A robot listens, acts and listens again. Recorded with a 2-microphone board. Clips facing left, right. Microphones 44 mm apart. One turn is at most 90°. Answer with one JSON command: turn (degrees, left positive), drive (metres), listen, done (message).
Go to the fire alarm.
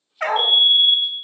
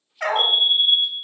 {"turn": -65}
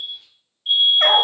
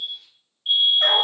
{"turn": -10}
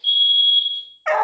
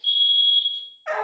{"drive": 1.0}
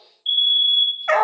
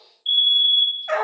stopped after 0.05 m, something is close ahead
{"done": "Blocked. The fire alarm is further on, straight ahead."}